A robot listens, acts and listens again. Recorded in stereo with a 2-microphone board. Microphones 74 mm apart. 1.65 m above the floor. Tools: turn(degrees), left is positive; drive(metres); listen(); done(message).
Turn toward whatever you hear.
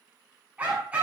turn(degrees=-20)
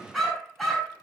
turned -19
done("Facing the dog barking.")